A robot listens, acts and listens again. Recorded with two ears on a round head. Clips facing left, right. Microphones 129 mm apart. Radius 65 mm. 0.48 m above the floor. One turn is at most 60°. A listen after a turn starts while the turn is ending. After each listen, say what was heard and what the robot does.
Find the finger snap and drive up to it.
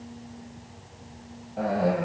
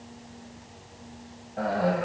Keep listening.
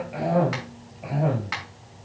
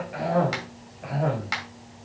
The finger snap: about 35° right or 145° right. Turn 35° right.
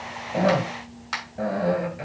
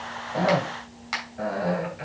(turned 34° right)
Drive 1.0 m forward.
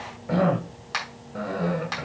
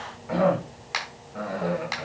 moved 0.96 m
Drive 1.0 m forward.
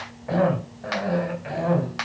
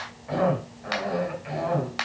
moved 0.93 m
Drive 1.0 m forward.
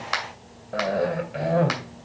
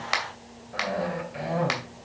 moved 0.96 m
Drive 1.0 m forward.
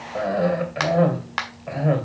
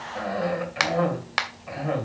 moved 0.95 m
The finger snap is now 15° right. Turn 15° right.
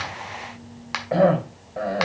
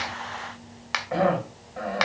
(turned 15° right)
Drive 1.0 m forward.
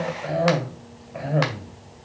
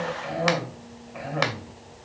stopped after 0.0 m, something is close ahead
Keep listening.
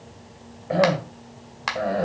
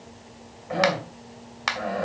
Arrived at the finger snap, straight ahead.